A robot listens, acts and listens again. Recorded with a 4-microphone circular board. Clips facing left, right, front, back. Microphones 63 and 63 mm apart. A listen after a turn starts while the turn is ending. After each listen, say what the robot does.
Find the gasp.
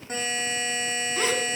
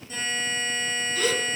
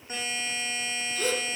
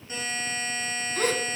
Turn 145° left.
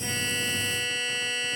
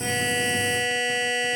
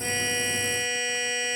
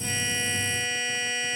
I heard a gasp from this way, but can't make it out now.